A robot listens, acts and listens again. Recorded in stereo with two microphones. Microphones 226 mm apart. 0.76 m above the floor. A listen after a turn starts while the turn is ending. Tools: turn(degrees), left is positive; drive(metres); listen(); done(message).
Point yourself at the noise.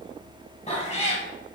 turn(degrees=30)
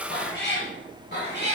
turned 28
turn(degrees=130)
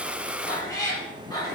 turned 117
turn(degrees=20)
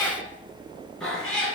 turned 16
done("Facing the cat meowing.")